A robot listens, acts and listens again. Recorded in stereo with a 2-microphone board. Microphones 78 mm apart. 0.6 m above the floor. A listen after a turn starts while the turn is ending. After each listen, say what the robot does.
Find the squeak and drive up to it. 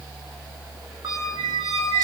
Turn 55° right.
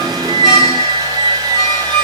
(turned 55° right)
Drive 1.0 m forward.
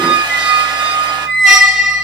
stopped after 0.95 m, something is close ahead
Turn 10° right.
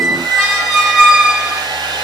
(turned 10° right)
I am next to the squeak.